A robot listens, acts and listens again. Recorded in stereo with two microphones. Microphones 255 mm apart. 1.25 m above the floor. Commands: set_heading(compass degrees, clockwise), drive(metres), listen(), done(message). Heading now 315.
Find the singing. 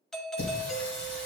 set_heading(270)
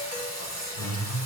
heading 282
set_heading(187)
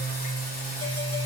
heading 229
set_heading(199)
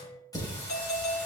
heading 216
set_heading(201)
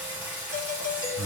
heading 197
set_heading(207)
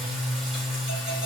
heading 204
done("Found it: singing, straight ahead, 2 to 4 m away.")